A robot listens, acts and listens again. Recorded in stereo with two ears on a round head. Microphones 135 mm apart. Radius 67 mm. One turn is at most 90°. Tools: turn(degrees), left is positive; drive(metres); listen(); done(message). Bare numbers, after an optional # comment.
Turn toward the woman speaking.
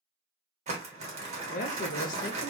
# The woman speaking: about 60° left or 120° left.
turn(60)
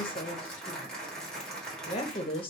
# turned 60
# So it is at 40° left.
turn(40)
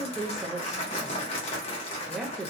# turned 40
done("Facing the woman speaking, under 1 m away.")